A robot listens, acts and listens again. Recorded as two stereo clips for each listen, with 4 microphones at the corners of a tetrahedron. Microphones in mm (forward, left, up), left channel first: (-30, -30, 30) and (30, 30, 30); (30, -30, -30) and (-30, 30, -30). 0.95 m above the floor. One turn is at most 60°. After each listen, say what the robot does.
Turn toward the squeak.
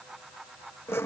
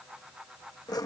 Keep listening.
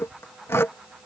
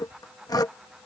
Keep listening.
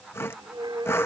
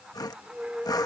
Turn 60° left.
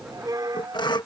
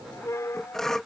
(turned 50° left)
Turn 10° left.
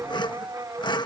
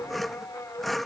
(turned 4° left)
Found it: a squeak, straight ahead.